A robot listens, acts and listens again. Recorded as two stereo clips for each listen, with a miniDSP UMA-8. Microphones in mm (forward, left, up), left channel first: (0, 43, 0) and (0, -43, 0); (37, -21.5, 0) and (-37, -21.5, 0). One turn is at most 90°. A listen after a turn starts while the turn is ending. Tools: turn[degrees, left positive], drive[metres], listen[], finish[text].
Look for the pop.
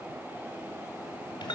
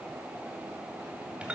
Action: listen[]
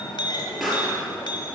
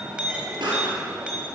Thought: The pop: 175° right.
Action: turn[-90]
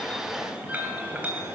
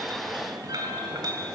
Thought: Nothing new. It was at 85° right.
Action: turn[-85]
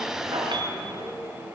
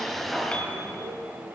Action: finish[I heard a pop from this way, but can't make it out now.]